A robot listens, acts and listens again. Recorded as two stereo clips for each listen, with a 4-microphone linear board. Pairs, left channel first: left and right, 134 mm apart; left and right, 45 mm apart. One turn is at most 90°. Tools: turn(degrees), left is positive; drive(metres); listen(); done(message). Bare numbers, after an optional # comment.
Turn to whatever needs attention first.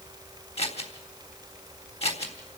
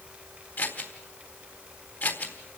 listen()
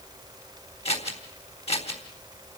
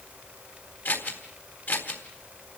listen()
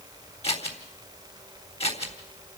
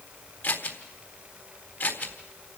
done("I can't make out anything urgent to turn to.")